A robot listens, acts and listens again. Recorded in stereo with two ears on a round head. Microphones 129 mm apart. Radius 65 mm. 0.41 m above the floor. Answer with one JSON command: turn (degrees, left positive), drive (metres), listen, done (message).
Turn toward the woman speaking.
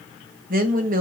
{"turn": -60}
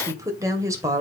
{"turn": -20}
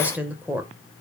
{"turn": -10}
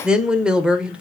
{"done": "Found it: a woman speaking, straight ahead."}